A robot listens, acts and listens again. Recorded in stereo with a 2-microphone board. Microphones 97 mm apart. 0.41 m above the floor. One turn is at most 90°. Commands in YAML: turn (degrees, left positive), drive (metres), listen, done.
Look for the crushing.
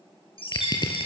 turn: 45
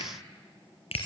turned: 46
turn: 85
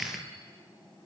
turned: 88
done: "Found it: crushing, straight ahead."